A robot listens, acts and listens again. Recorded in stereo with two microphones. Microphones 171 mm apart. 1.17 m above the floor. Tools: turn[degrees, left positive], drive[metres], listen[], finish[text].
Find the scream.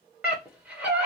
Action: turn[-30]
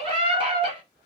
Thought: So it is at 140° right.
Action: turn[-140]
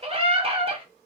Thought: The scream is now 40° right.
Action: turn[-40]
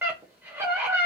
Thought: The scream is now 15° right.
Action: turn[-15]
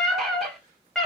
Action: finish[Found it: a scream, straight ahead, under 1 m away.]